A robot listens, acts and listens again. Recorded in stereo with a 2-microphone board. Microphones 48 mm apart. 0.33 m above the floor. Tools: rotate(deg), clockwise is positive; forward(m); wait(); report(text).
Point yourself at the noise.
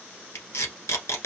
rotate(-90)
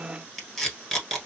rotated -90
report("Facing the tape being pulled.")